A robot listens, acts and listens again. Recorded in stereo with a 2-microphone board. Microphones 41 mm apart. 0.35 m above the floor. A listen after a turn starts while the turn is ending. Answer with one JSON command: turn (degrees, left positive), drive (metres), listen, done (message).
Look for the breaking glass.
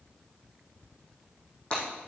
{"turn": 25}
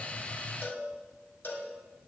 {"listen": true}
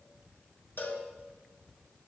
{"done": "I heard breaking glass, but can't make it out now. It was about straight ahead or 130° left."}